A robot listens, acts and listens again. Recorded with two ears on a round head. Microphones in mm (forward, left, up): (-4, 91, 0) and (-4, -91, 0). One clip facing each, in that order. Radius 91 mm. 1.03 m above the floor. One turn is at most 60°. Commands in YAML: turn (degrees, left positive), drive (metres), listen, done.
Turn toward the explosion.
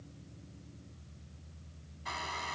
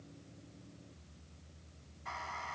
listen: true
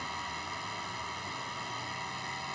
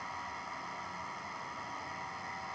listen: true
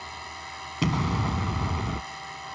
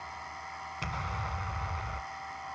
turn: 60
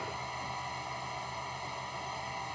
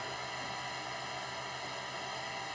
listen: true
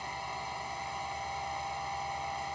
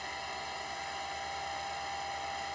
done: "I heard an explosion, but can't make it out now. It was about 5° left or 55° left."